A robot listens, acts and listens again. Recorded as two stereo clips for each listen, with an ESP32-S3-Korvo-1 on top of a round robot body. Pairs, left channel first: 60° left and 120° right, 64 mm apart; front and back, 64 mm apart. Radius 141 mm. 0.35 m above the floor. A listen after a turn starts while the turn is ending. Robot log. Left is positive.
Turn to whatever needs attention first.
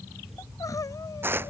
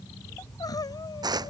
note: The crying: 25° left.
cmd yaw +25
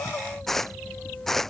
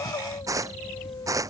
cmd idle
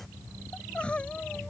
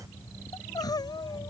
note: The crying is now 15° right.
cmd yaw -15
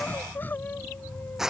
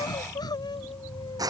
end: Facing the crying.